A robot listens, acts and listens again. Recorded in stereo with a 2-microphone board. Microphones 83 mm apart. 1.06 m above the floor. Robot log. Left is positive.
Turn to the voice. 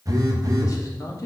note: The man speaking: about 40° left or 140° left.
cmd yaw +40
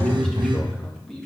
end: Found it: a man speaking, straight ahead.